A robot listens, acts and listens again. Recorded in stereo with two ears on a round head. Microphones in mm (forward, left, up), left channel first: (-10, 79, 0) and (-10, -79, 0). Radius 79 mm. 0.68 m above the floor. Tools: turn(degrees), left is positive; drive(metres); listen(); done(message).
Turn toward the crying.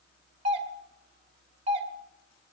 listen()
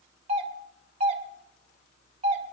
listen()
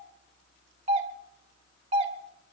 done("I can't make out crying to turn to.")